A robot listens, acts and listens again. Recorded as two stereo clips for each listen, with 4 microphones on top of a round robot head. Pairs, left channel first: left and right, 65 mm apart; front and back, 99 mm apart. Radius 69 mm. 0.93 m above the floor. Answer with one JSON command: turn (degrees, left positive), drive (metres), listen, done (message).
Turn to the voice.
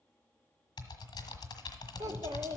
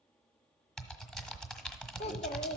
{"turn": -35}
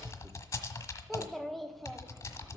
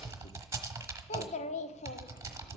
{"done": "Found it: a child speaking, straight ahead, 1 to 2 m away."}